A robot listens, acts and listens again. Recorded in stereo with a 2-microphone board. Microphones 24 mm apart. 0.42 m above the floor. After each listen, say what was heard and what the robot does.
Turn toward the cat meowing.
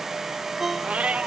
The cat meowing: about 65° right or 115° right. Turn 65° right.
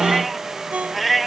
Found it: a cat meowing, straight ahead.